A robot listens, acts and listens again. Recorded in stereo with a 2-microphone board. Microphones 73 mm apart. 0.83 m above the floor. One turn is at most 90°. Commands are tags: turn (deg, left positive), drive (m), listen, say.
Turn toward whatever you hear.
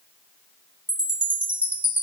<turn deg="-20"/>
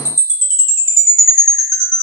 <turn deg="-90"/>
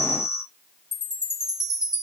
<turn deg="-85"/>
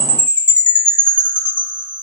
<turn deg="20"/>
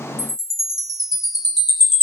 <say>Facing the chime, 1 to 2 m away.</say>